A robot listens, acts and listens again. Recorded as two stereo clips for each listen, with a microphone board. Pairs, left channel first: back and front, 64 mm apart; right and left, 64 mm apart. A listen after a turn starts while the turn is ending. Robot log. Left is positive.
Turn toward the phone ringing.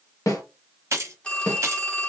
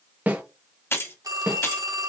note: The phone ringing: 105° left.
cmd yaw +105
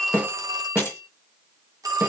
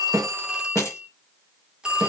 note: The phone ringing is now 15° left.
cmd yaw +15
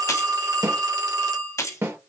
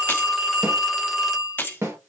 end: Facing the phone ringing, 1 to 2 m away.